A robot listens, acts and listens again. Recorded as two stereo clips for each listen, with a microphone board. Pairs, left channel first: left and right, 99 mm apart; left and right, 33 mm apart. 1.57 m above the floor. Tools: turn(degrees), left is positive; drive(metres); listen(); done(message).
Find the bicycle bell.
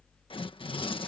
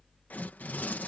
listen()
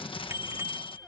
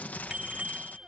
turn(degrees=-30)
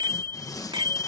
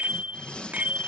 turn(degrees=-115)
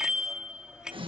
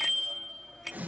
turn(degrees=-10)
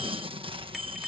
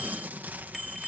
done("Found it: a bicycle bell, straight ahead.")